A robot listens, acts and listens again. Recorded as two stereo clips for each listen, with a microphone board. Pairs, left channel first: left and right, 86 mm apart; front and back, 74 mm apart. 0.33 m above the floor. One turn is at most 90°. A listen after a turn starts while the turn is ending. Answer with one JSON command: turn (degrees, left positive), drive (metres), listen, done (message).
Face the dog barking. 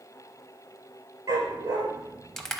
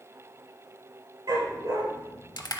{"turn": -90}
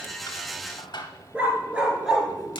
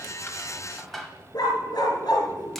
{"done": "Found it: a dog barking, straight ahead, 1 to 2 m away."}